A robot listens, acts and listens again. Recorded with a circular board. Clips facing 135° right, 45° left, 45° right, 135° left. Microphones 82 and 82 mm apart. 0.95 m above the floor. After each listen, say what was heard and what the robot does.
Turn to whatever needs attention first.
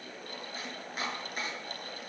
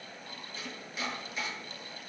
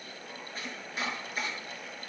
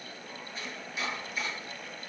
Keep listening.
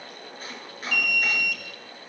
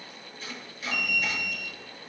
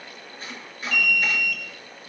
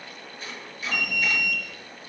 The alarm: 165° right. Turn 165° right.
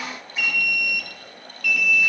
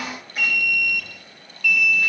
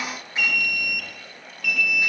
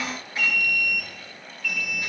The alarm is now 45° right. Turn 45° right.
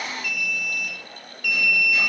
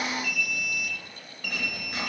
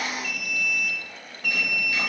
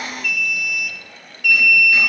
Found it: an alarm, straight ahead.